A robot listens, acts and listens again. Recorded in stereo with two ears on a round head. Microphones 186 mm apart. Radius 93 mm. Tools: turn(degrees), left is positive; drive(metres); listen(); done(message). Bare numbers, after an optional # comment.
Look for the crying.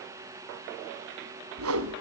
listen()
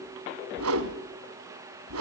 listen()
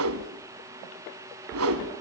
done("I can't make out crying, only a whoosh.")